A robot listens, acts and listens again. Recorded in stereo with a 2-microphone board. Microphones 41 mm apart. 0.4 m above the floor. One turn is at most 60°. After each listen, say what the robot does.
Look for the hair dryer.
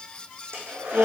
Turn 60° right.
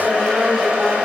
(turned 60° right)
Turn 45° right.
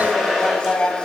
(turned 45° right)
Turn 10° right.
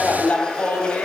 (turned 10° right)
Keep listening.
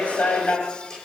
Keep listening.
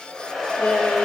Found it: a hair dryer, straight ahead, over 4 m away.